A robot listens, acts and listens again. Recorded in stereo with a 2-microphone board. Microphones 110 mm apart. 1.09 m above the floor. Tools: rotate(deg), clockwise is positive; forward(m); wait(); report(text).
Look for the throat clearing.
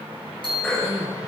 rotate(-30)
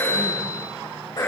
rotate(-145)
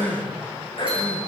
rotate(-55)
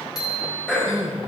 rotate(-10)
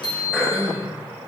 report("Facing the throat clearing, over 4 m away.")